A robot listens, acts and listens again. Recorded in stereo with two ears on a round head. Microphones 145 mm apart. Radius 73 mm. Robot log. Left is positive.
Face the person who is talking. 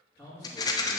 cmd yaw +30
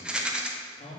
note: So it is at 140° left.
cmd yaw +140
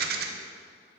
cmd idle
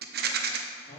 note: The man speaking is now 35° left.
cmd yaw +35
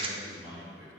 end: Facing the man speaking, 2 to 4 m away.